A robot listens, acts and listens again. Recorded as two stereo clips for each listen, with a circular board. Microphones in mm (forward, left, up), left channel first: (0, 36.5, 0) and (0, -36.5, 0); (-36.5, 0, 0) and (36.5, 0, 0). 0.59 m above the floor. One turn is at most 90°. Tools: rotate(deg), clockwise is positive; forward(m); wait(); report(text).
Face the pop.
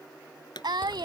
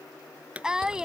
rotate(-75)
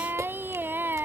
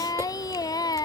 report("Facing where the pop came from. I can't hear it now.")